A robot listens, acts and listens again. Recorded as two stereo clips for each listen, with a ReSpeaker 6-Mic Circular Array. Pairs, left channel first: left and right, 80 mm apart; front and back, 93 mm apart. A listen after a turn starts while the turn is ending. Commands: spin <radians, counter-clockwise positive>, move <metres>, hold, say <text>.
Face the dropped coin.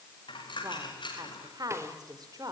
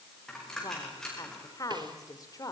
spin 1.48
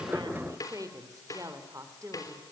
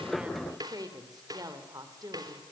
say I heard a dropped coin from this way, but can't make it out now.